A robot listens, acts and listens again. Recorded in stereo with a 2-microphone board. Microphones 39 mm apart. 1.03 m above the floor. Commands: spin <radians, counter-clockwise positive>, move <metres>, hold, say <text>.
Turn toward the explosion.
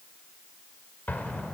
spin 0.79
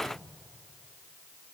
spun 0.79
hold
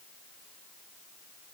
say I heard an explosion, but can't make it out now. It was about straight ahead or 90° left.